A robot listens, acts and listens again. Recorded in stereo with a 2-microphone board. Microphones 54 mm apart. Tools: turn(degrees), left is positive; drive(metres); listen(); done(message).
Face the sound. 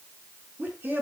turn(degrees=-40)
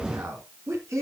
turn(degrees=-115)
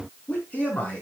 turn(degrees=25)
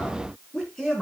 done("Facing the man speaking, over 4 m away.")